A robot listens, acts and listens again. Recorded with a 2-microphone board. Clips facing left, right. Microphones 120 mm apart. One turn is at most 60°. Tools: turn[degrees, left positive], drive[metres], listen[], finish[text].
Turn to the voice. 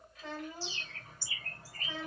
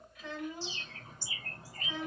Thought: The child speaking: about 35° left or 145° left.
Action: turn[35]
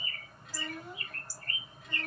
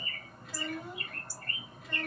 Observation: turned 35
Action: finish[Found it: a child speaking, straight ahead.]